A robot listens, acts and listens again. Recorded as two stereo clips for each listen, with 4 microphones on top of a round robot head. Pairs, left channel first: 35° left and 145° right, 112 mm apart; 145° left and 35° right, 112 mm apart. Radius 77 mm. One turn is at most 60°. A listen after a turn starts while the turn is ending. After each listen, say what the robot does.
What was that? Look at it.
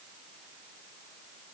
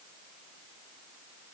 Keep listening.
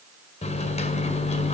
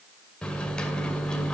Turn 60° left.
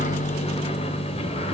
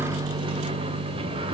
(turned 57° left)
Facing the microwave, 2 to 4 m away.